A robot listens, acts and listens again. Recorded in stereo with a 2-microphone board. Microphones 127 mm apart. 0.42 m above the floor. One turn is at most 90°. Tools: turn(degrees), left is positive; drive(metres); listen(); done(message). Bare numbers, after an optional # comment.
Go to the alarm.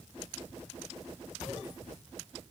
listen()
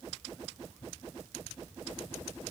listen()
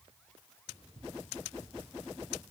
done("I can't make out an alarm to turn to.")